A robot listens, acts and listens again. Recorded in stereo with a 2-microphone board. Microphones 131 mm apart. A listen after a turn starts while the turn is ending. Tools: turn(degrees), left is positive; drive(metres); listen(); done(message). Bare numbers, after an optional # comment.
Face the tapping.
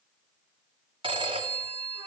listen()
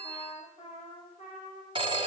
listen()
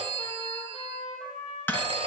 turn(30)
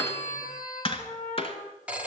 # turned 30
# So it is at 135° left.
turn(135)
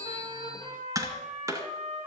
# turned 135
# The tapping is now 25° right.
turn(-25)
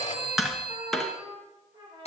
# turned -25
done("Found it: tapping, straight ahead, 2 to 4 m away.")